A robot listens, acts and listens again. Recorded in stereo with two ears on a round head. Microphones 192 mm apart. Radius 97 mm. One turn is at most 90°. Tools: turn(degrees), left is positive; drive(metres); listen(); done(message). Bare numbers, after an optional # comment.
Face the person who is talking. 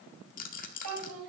turn(-90)
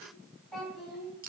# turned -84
done("Facing the child speaking, over 4 m away.")